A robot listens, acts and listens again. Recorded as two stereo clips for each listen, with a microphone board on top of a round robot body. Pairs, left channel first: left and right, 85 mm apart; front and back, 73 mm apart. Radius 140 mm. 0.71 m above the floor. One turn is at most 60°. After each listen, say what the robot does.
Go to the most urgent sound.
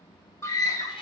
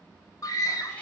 Turn 40° left.
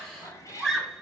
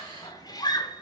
Drive 1.0 m forward.
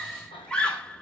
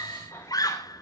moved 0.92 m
Turn 10° left.
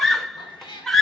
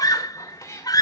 Drive 1.0 m forward.
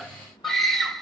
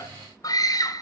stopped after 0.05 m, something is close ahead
I am next to the scream.